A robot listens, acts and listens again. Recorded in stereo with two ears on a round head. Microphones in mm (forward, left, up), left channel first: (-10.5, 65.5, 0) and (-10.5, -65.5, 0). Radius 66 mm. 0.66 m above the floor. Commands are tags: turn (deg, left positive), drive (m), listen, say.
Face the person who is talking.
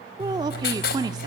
<turn deg="-25"/>
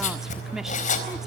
<listen/>
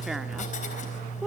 <listen/>
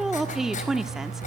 <say>Found it: a woman speaking, straight ahead.</say>